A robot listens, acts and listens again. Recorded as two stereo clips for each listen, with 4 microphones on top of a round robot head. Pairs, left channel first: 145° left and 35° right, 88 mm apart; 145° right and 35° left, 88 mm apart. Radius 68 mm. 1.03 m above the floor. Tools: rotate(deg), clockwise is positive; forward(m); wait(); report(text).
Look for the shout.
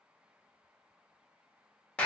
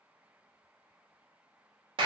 wait()
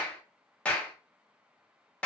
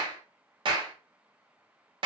wait()
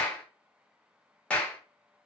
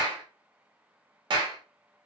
report("I can't make out a shout, only a clap.")